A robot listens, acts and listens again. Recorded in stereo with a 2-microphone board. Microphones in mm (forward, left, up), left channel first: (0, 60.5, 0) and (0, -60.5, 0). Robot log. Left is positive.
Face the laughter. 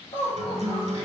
note: The laughter: about 55° left or 125° left.
cmd yaw +55
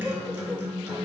cmd idle
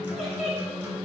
end: Facing the laughter, 1 to 2 m away.